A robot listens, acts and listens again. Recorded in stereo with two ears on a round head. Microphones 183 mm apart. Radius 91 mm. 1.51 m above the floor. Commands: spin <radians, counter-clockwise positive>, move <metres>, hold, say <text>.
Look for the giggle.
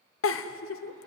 spin 1.57
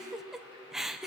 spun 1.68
say Facing the giggle.